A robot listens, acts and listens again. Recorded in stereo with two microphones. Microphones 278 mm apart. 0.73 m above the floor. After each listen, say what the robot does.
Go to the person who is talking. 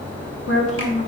Turn 55° left.
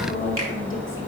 Keep listening.
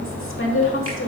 Turn 60° left.
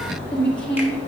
Drive 1.0 m forward.
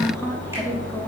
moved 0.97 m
Keep listening.
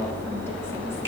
Keep listening.
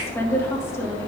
Turn 15° left.
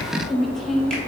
Drive 1.0 m forward.
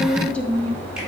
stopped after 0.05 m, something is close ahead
Arrived at the woman speaking, straight ahead.